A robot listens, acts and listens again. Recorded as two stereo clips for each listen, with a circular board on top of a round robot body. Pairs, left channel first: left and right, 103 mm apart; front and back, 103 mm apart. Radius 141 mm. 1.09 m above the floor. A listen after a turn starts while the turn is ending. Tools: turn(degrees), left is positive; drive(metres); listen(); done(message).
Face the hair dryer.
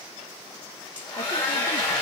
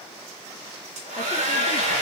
turn(degrees=170)
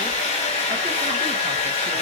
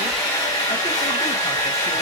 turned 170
turn(degrees=60)
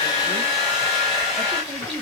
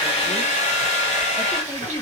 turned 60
done("Facing the hair dryer.")